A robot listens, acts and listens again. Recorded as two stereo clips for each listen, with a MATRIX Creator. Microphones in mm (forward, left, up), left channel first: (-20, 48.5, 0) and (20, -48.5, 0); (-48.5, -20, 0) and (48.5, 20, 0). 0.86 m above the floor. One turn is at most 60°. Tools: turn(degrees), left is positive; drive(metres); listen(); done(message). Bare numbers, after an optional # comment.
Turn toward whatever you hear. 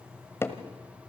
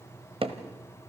# The hammering: 45° left.
turn(45)
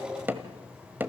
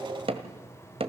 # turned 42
done("Found it: hammering, straight ahead, 1 to 2 m away.")